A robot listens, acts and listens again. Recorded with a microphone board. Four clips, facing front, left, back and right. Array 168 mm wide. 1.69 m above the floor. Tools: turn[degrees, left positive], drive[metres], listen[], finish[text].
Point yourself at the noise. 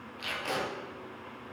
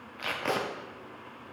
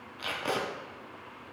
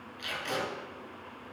Thought: The tape being pulled: 115° left.
Action: turn[115]
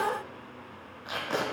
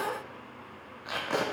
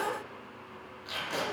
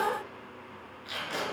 Thought: The tape being pulled is now 50° left.
Action: turn[50]
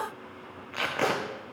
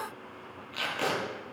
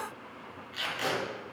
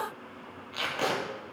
Action: finish[Found it: tape being pulled, straight ahead, under 1 m away.]